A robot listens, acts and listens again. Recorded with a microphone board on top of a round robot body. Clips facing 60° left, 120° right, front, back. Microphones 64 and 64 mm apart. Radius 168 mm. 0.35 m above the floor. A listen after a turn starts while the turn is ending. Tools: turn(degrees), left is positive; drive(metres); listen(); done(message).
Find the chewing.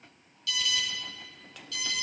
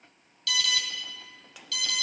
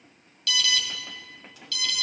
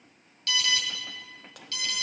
listen()
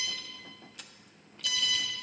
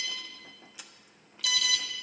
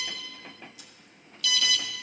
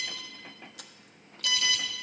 turn(degrees=155)
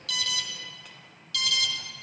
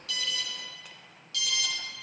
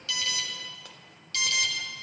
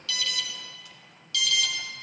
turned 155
listen()
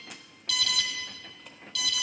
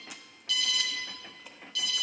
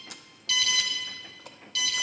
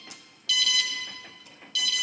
turn(degrees=-35)
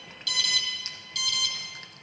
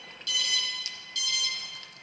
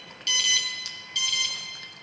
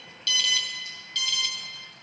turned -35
listen()
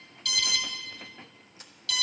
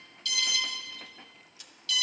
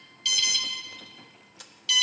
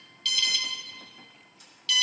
done("Facing the chewing, under 1 m away.")